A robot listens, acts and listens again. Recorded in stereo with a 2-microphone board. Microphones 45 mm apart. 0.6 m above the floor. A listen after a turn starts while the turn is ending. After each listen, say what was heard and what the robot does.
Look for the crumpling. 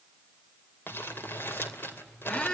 The crumpling: about 50° left or 130° left. Turn 50° left.
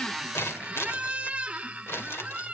So it is at 70° left. Turn 70° left.
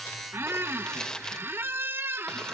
The crumpling is now 20° left. Turn 20° left.
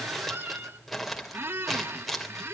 Found it: crumpling, straight ahead, 2 to 4 m away.